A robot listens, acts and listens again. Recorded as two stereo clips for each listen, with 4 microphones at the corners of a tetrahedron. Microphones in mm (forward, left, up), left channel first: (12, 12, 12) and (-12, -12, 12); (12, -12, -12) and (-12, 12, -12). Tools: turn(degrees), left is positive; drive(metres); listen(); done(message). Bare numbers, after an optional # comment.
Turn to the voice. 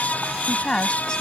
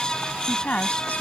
# The woman speaking: 15° right.
turn(-15)
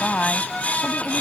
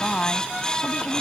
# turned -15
done("Facing the woman speaking.")